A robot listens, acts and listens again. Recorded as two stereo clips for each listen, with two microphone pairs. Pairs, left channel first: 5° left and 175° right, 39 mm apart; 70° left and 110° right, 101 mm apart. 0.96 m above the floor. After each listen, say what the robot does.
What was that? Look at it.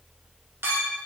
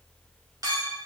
Turn 160° right.
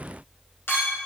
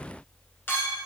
Found it: a clink, straight ahead.